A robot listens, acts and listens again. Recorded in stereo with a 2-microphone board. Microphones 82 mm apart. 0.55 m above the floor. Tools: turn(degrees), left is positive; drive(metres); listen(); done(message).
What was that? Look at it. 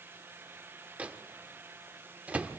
turn(degrees=-15)
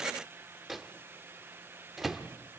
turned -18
done("Facing the microwave, under 1 m away.")